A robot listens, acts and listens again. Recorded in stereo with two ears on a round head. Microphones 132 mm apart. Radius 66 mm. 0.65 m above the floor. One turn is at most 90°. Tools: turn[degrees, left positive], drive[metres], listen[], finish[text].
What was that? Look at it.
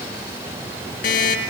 Thought: The alarm clock: about 60° left or 120° left.
Action: turn[60]
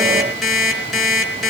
Action: finish[Facing the alarm clock, over 4 m away.]